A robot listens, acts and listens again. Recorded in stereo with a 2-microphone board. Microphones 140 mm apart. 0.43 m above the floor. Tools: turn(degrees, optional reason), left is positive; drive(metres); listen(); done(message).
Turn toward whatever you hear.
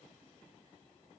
listen()
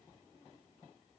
listen()
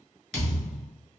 turn(degrees=30)
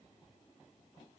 listen()
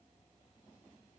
done("I heard a thud, but can't make it out now. It was about 30° right or 150° left.")